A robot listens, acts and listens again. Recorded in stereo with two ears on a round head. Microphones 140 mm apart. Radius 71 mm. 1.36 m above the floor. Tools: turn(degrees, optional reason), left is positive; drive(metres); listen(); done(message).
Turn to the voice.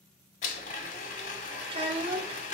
turn(degrees=-40, reason="The child speaking: about 40° right or 140° right.")
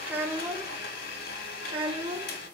turn(degrees=-35, reason="The child speaking: about 35° right or 145° right.")
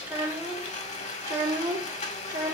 turn(degrees=-25, reason="So it is at 25° right.")
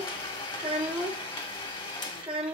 turn(degrees=-10, reason="The child speaking is now 10° right.")
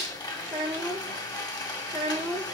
done("Facing the child speaking.")